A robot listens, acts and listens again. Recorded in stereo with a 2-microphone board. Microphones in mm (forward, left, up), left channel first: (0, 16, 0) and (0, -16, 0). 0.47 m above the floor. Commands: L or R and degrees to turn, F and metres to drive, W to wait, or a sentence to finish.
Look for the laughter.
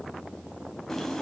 W
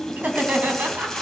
R65
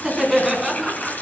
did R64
R10
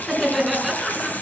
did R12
Found it: laughter, straight ahead, over 4 m away.